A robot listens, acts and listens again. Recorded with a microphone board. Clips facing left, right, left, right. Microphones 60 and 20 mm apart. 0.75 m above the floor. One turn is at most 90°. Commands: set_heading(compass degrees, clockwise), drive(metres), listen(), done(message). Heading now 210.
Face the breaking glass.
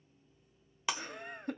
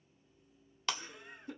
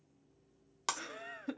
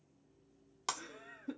set_heading(180)
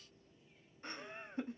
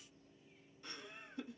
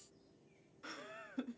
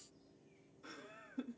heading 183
listen()
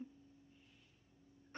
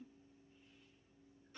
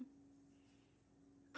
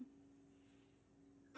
done("I heard breaking glass, but can't make it out now. It was about 10° right or 140° left.")